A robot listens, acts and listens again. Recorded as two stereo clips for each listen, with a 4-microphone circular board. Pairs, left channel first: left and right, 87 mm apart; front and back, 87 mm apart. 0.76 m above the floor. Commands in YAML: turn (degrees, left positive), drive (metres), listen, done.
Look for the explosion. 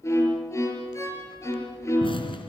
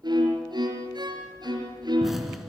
turn: 95
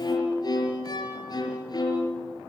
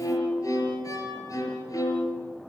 done: "I heard an explosion from this way, but can't make it out now."